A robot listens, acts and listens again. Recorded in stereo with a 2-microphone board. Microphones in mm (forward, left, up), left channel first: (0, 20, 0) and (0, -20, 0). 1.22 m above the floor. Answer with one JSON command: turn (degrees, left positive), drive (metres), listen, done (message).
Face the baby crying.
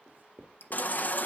{"turn": 45}
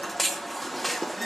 {"done": "Found it: a baby crying, straight ahead."}